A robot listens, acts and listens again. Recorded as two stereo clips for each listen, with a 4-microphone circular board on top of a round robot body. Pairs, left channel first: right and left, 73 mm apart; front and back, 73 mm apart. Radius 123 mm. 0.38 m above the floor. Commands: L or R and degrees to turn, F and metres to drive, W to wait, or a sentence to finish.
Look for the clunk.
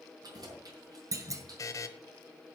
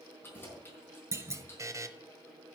L130
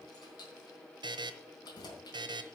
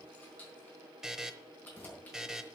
I heard a clunk from this way, but can't make it out now.